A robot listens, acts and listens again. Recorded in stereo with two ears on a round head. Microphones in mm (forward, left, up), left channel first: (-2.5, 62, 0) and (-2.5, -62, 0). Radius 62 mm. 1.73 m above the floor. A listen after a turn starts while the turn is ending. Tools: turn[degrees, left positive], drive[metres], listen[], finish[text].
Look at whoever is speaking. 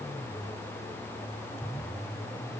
Action: listen[]
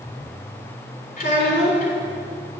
Thought: The child speaking: about 65° left or 115° left.
Action: turn[65]
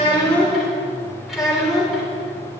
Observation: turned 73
Action: finish[Facing the child speaking, 2 to 4 m away.]